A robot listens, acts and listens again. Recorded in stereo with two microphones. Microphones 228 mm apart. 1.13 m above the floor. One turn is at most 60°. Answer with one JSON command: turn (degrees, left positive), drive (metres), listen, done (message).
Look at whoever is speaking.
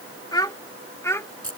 {"turn": 30}
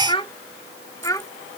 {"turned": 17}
{"turn": 30}
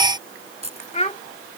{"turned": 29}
{"turn": 60}
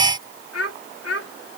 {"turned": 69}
{"turn": 60}
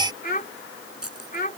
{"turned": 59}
{"turn": 40}
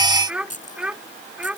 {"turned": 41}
{"done": "Found it: a child speaking, straight ahead."}